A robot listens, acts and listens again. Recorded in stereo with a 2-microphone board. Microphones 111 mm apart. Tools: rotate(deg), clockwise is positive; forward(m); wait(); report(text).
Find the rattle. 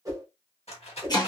rotate(-65)
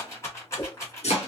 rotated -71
rotate(-30)
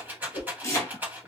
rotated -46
rotate(15)
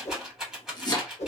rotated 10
report("Facing the rattle.")